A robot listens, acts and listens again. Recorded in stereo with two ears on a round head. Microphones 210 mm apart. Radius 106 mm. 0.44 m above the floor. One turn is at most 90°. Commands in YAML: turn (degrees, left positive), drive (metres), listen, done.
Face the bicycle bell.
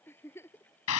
listen: true
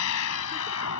listen: true
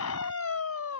done: "I can't make out a bicycle bell, only a scream and a giggle."